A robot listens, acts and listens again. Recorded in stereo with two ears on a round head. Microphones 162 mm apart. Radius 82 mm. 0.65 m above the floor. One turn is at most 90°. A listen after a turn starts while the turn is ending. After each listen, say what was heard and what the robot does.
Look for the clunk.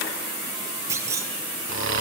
The clunk: about 15° right or 165° right. Turn 15° right.
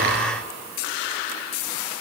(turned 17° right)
Keep listening.
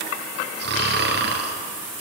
I heard a clunk, but can't make it out now. It was about straight ahead or 145° right.